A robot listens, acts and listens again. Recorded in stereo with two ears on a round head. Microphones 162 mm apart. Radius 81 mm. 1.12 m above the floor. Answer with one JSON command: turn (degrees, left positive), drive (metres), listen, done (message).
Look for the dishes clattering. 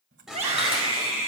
{"turn": -30}
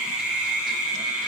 {"listen": true}
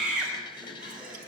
{"turn": 30}
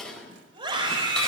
{"done": "Found it: dishes clattering, straight ahead, over 4 m away."}